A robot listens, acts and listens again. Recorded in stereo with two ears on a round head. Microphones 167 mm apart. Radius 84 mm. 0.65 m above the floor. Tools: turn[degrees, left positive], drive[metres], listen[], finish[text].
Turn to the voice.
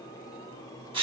Action: listen[]
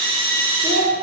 Thought: The child speaking: about 40° right or 140° right.
Action: turn[-40]
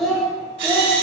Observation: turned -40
Action: finish[Facing the child speaking, 2 to 4 m away.]